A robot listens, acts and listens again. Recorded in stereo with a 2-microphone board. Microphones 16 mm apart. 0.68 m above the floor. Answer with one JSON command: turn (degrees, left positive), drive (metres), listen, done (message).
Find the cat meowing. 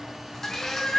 {"turn": 75}
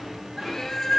{"turn": 35}
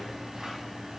{"listen": true}
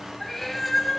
{"turn": 15}
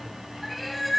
{"done": "Facing the cat meowing, 1 to 2 m away."}